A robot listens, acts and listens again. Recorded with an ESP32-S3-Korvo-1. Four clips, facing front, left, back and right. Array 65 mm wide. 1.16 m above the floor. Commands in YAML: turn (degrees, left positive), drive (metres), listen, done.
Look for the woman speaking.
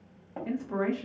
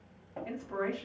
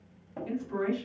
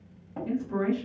turn: 25
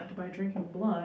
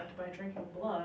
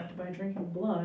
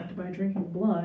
turn: -20
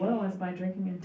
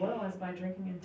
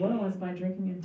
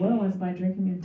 turn: -20
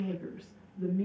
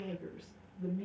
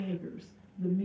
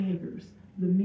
turn: -15
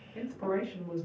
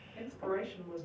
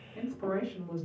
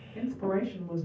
turn: -15
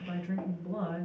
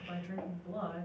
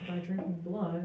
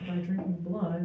done: "Facing the woman speaking, 1 to 2 m away."